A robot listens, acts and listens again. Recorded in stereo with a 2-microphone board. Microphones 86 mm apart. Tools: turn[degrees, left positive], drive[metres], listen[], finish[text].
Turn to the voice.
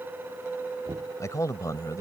Thought: The man speaking: about 40° left or 140° left.
Action: turn[40]
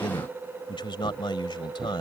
Thought: So it is at 95° left.
Action: turn[95]
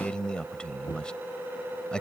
Thought: The man speaking is now 10° left.
Action: turn[10]
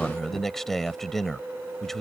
Action: finish[Found it: a man speaking, straight ahead.]